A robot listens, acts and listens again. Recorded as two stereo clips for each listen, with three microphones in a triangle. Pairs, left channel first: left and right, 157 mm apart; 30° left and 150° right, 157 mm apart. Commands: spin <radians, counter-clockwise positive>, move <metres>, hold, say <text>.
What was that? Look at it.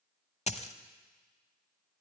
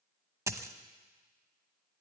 spin 2.44
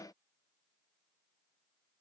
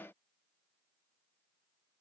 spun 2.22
spin 0.26
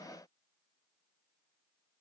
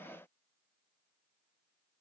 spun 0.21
say I heard a dropped coin from this way, but can't make it out now.